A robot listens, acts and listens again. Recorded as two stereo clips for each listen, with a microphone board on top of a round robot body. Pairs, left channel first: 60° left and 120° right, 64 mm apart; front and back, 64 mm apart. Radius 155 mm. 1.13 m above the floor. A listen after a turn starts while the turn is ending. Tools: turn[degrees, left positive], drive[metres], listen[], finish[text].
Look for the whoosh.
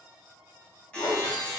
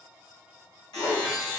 Thought: The whoosh: 35° left.
Action: turn[35]
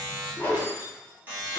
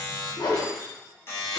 Action: finish[Found it: a whoosh, straight ahead, 1 to 2 m away.]